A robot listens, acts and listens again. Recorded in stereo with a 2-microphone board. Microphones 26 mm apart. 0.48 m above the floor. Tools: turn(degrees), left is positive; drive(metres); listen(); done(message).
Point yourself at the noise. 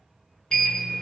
turn(degrees=35)
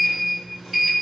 done("Facing the sliding door, 1 to 2 m away.")